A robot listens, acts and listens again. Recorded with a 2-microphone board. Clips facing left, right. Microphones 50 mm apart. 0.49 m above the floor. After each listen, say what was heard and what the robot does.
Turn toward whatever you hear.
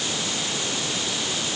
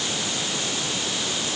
Keep listening.
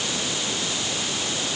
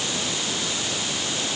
Keep listening.
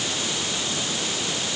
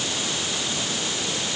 I can't make out anything to turn to.